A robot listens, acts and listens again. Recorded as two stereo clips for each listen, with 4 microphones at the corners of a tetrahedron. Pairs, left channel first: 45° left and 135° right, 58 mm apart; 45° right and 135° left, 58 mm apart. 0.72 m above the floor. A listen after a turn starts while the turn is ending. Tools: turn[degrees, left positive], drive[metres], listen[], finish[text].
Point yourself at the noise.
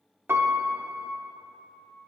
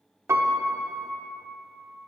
Thought: The piano: 175° left.
Action: turn[175]
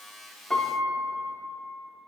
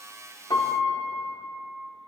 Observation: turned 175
Thought: The piano is now 35° right.
Action: turn[-35]
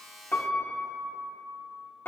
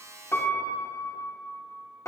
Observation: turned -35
Thought: The piano is now 10° right.
Action: turn[-10]
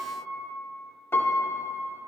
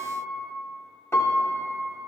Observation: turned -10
Action: finish[Facing the piano.]